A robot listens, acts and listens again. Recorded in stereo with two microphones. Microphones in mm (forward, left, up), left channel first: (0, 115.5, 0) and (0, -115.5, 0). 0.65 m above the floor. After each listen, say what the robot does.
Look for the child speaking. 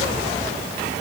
Keep listening.
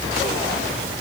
Keep listening.
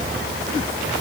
I can't make out a child speaking.